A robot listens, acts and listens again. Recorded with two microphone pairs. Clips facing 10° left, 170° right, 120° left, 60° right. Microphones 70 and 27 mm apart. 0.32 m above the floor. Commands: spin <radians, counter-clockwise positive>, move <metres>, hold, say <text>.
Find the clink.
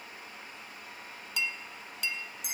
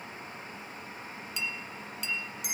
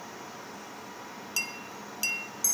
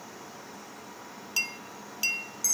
say Found it: a clink, straight ahead.